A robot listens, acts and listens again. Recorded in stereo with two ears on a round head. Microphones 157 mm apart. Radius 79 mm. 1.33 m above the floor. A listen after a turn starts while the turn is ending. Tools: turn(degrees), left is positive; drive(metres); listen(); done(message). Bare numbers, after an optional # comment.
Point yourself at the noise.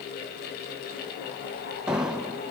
turn(-30)
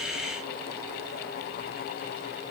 listen()
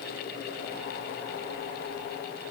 done("I heard an explosion, but can't make it out now. It was about 25° left or 145° right.")